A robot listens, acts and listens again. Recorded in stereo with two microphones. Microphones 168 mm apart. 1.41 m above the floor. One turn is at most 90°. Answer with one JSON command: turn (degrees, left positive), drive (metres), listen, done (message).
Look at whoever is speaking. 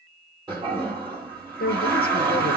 {"turn": 65}
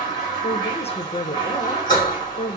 {"turn": 40}
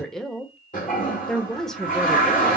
{"done": "Facing the woman speaking."}